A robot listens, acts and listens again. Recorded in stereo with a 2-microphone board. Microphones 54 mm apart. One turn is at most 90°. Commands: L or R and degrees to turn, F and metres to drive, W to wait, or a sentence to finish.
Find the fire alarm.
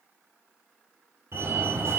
R50
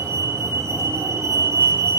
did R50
R75
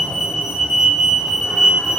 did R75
Facing the fire alarm, over 4 m away.